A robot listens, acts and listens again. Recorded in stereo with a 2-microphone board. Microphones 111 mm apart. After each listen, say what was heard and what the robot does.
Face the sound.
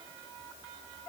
Keep listening.
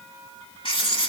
The writing: about 50° left or 130° left. Turn 50° left.
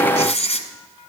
So it is at 80° left. Turn 80° left.
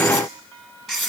Found it: writing, straight ahead, 1 to 2 m away.